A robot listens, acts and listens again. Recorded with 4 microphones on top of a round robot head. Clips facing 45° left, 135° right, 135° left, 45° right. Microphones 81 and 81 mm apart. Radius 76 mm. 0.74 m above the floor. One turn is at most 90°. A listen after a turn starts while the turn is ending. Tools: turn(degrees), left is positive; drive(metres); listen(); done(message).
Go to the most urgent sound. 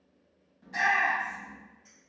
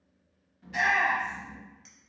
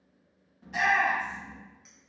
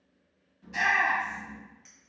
turn(degrees=90)
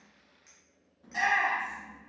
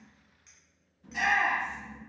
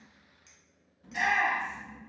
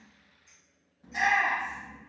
turn(degrees=10)
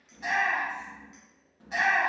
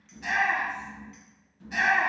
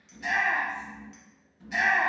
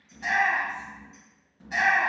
drive(metres=1.0)
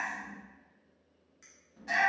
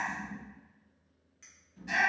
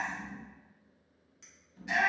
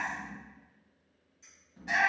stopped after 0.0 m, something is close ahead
done("Something is in my way. I am facing the shout but have not reached it.")